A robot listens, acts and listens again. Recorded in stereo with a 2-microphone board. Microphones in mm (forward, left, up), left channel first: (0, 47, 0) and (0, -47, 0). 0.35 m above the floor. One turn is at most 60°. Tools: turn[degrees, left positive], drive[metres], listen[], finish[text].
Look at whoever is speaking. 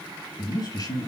Thought: The man speaking: about 45° left or 135° left.
Action: turn[45]
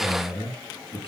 Thought: So it is at 85° left.
Action: turn[60]
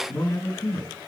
Thought: The man speaking is now 25° left.
Action: turn[25]
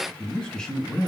Action: finish[Facing the man speaking.]